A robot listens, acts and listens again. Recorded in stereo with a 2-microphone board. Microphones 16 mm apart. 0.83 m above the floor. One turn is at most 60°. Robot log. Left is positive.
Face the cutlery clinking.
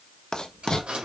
cmd yaw -60
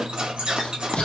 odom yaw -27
note: So it is at 60° right.
cmd yaw -60
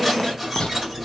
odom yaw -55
end: Found it: cutlery clinking, straight ahead, 2 to 4 m away.